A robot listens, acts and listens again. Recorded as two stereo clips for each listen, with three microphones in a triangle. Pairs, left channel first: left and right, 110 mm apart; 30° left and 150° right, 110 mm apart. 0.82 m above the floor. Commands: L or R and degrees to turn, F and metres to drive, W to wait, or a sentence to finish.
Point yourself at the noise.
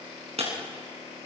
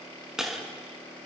R65
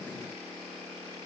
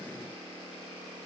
I heard breaking glass from this way, but can't make it out now.